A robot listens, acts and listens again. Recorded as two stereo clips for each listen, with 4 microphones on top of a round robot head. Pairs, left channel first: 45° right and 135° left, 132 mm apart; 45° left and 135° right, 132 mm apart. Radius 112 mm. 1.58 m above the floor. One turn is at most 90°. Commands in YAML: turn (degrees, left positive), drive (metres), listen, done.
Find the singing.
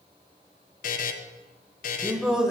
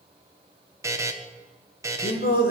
turn: 45
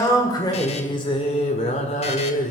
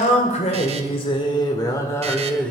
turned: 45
turn: -35
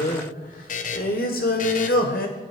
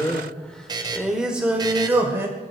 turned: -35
turn: -60
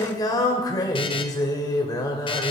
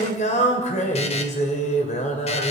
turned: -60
turn: 15
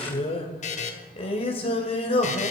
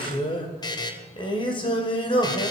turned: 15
done: "Facing the singing."